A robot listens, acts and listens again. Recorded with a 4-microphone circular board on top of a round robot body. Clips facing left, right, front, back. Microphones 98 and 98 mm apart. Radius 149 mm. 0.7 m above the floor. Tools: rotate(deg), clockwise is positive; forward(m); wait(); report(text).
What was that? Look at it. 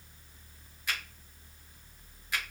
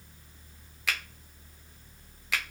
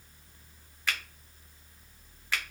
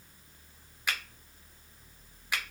rotate(100)
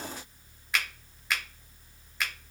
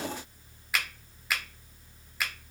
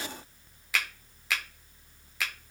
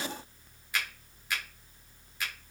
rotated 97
report("Facing the finger snap, under 1 m away.")